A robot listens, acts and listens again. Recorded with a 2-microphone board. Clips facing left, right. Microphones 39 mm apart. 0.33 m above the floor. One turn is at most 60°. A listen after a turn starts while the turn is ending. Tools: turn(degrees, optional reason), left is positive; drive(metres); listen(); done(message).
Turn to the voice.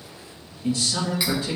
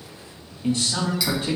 turn(degrees=-45, reason="The man speaking: about 45° right or 135° right.")
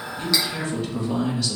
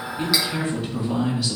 turn(degrees=-10, reason="So it is at 10° right.")
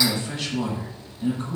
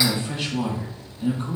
done("Found it: a man speaking, straight ahead, 1 to 2 m away.")